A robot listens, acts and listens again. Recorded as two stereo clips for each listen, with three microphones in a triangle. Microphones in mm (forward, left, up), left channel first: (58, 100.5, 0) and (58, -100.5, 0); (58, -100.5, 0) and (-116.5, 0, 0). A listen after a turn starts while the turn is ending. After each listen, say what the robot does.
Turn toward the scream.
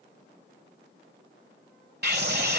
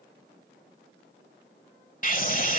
Turn 70° right.
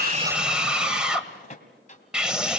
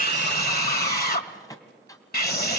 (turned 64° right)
Found it: a scream, straight ahead, 1 to 2 m away.